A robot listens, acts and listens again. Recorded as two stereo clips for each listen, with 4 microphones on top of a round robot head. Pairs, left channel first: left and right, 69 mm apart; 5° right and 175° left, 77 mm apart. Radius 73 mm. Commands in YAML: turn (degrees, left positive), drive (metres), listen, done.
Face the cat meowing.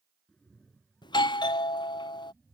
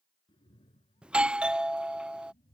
done: "Found it: a cat meowing, straight ahead."